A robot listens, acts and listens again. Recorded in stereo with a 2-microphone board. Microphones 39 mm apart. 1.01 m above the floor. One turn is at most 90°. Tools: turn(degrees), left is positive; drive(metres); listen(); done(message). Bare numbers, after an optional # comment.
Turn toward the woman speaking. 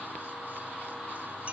listen()
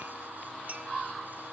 listen()
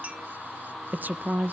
# The woman speaking: about 45° right or 135° right.
turn(-45)
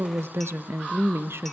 # So it is at 90° right.
turn(-90)
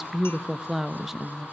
# The woman speaking is now 10° right.
turn(-10)
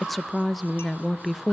done("Found it: a woman speaking, straight ahead, under 1 m away.")